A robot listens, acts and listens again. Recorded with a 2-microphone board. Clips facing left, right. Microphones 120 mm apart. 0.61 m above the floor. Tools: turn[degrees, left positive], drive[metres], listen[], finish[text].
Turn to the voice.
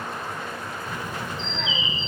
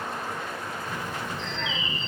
Action: turn[30]
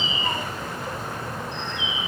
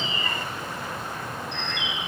Thought: So it is at 140° left.
Action: turn[140]
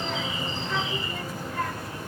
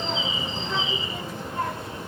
Thought: The child speaking is now 25° right.
Action: turn[-25]
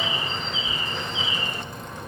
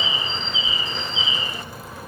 Action: finish[Found it: a child speaking, straight ahead, 1 to 2 m away.]